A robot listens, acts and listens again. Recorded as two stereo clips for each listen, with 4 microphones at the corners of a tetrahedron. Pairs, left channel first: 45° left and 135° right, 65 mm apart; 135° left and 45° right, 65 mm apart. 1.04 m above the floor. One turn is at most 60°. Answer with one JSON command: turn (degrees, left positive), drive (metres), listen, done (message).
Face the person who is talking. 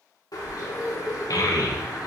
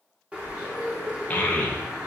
{"turn": 60}
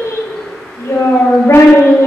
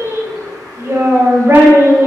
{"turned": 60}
{"done": "Facing the child speaking."}